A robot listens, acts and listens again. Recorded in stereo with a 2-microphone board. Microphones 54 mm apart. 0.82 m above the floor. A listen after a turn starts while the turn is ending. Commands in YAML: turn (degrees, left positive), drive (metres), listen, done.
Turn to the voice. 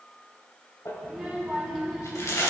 turn: 30
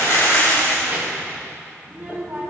turn: -30
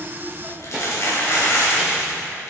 done: "Found it: a child speaking, straight ahead, 2 to 4 m away."